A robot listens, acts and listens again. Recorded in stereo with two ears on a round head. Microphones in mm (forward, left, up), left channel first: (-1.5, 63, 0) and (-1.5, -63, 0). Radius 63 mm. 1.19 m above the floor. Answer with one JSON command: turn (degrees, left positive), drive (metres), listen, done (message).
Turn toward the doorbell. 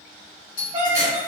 {"turn": 65}
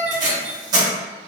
{"listen": true}
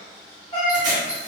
{"listen": true}
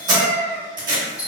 {"turn": 25}
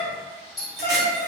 {"done": "Found it: a doorbell, straight ahead."}